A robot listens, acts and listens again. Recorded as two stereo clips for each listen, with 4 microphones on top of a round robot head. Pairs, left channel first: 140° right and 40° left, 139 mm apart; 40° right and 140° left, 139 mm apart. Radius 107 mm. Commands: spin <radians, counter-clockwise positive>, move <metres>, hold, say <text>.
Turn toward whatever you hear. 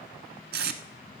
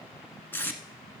spin 0.70
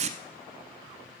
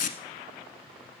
say Facing the tape being pulled, under 1 m away.